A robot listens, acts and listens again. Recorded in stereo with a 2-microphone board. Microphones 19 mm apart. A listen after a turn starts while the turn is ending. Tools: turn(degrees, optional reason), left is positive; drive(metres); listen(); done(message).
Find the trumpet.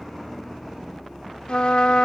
turn(degrees=65, reason="The trumpet: about 65° left or 115° left.")
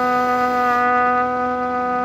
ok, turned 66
turn(degrees=10, reason="So it is at 10° left.")
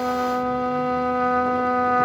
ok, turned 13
done("Found it: a trumpet, straight ahead.")